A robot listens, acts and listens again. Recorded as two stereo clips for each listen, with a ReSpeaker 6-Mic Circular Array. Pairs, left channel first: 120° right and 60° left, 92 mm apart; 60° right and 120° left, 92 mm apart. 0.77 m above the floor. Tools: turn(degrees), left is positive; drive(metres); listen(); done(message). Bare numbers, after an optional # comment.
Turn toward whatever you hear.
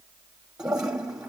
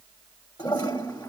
# The toilet flushing: 20° right.
turn(-20)
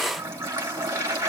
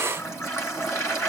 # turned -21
done("Found it: a toilet flushing, straight ahead.")